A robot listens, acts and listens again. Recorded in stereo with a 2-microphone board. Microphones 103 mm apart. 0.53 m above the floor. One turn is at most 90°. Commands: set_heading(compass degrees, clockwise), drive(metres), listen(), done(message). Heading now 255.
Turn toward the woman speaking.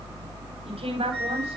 set_heading(325)
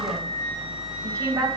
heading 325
set_heading(0)
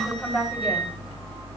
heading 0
done("Facing the woman speaking, 2 to 4 m away.")